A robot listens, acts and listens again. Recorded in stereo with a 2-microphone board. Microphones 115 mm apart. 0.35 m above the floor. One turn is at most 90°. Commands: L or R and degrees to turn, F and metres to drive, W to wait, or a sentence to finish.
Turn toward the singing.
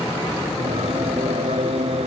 R70
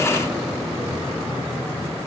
W
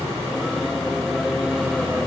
Facing the singing.